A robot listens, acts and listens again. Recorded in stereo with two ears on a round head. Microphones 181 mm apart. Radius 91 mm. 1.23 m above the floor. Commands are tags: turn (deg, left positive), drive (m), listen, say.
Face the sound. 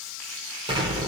<turn deg="-25"/>
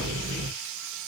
<turn deg="-130"/>
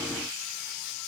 <say>I heard an explosion from this way, but can't make it out now.</say>